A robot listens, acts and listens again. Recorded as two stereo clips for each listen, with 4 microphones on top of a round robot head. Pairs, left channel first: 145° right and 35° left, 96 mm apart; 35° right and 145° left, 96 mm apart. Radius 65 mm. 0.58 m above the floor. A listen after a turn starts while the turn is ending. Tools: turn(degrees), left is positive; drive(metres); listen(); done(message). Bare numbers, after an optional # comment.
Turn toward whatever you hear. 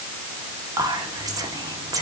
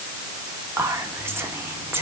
# The whispering: 80° left.
turn(80)
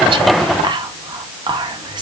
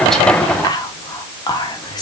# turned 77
done("Found it: whispering, straight ahead, 1 to 2 m away.")